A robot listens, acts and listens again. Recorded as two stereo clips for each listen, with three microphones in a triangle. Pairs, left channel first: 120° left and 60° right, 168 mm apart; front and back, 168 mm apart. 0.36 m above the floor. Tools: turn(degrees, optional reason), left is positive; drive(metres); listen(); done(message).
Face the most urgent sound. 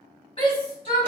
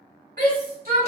turn(degrees=175, reason="The shout: 175° left.")
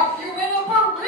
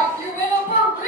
turn(degrees=25, reason="The shout is now 25° left.")
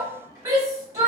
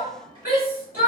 turn(degrees=10, reason="The shout is now 10° left.")
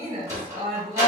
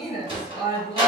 done("Facing the shout.")